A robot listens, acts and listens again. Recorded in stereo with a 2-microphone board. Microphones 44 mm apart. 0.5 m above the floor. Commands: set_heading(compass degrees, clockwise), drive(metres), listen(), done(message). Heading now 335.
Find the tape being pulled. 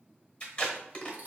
set_heading(315)
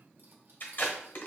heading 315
set_heading(180)
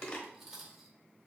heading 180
set_heading(150)
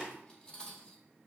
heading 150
done("Facing the tape being pulled, 1 to 2 m away.")